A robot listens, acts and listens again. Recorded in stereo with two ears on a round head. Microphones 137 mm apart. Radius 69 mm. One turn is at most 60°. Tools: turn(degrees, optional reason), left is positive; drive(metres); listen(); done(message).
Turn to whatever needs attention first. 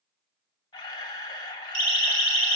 turn(degrees=-45, reason="The siren: about 45° right or 135° right.")
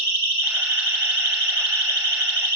turn(degrees=-60, reason="So it is at 90° right.")
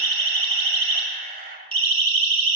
turn(degrees=-40, reason="The siren is now 40° right.")
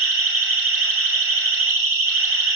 turn(degrees=-15, reason="The siren is now 15° right.")
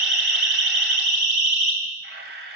done("Facing the siren, 2 to 4 m away.")